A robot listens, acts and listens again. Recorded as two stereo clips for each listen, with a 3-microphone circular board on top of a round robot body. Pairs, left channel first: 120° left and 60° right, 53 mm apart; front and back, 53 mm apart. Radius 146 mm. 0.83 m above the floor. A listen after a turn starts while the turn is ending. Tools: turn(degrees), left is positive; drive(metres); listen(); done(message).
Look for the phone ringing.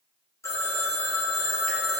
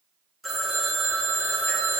turn(degrees=90)
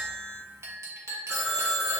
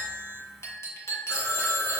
turn(degrees=30)
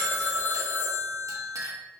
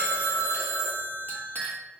done("Found it: a phone ringing, straight ahead, 1 to 2 m away.")